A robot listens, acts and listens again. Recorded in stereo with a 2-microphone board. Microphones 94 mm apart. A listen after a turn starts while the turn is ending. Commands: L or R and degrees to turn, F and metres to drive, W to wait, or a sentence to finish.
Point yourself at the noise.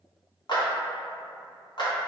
L50
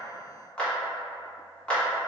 L15
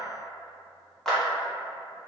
Found it: a clap, straight ahead, under 1 m away.